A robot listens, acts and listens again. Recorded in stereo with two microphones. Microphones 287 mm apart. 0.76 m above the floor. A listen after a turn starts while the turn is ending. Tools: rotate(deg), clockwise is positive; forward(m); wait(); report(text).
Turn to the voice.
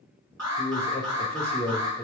rotate(-30)
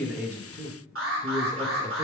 rotate(20)
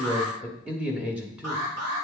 report("Found it: a man speaking, straight ahead.")